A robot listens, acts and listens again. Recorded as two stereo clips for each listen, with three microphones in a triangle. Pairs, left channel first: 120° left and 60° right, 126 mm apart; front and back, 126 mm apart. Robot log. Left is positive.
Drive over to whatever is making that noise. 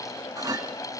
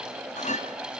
cmd fwd 1.0
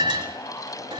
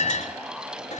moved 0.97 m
cmd fwd 1.0
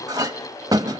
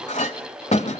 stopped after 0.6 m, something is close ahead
end: Arrived at the clink, straight ahead.